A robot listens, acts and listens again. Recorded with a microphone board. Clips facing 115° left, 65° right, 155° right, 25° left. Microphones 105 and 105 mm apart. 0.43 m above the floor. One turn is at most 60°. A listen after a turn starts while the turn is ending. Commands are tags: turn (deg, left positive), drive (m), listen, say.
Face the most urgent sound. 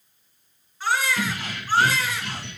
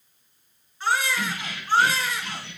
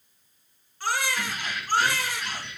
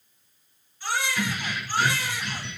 <turn deg="-60"/>
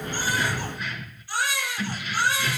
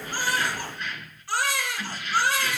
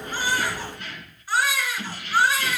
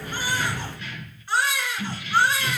<turn deg="-60"/>
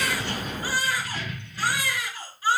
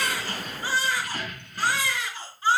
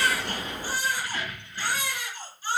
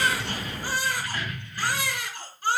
<say>Found it: a baby crying, straight ahead.</say>